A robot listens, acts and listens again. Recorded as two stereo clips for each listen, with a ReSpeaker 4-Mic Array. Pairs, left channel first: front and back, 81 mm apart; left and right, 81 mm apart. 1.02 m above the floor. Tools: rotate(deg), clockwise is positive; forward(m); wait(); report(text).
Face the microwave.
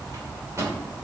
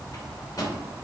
rotate(-130)
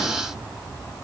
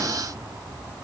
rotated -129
wait()
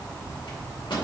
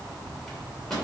report("Found it: a microwave, straight ahead.")